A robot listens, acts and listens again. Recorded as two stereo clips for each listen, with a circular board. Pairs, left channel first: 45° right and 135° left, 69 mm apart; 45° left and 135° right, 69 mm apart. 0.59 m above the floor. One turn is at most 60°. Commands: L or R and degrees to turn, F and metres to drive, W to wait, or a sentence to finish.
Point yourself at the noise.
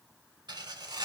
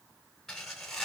L60
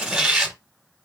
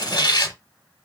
L55
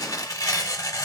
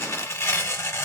R10
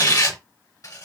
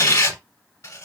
Facing the tearing paper, under 1 m away.